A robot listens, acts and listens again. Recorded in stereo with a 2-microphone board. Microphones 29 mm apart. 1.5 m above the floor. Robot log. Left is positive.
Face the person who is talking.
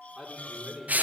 note: The man speaking: about 20° right or 160° right.
cmd yaw -20
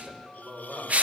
note: So it is at 135° right.
cmd yaw -135
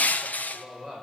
note: The man speaking is now 20° left.
cmd yaw +20
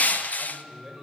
note: The man speaking is now 10° left.
cmd yaw +10
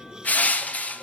cmd idle
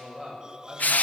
end: Found it: a man speaking, straight ahead, over 4 m away.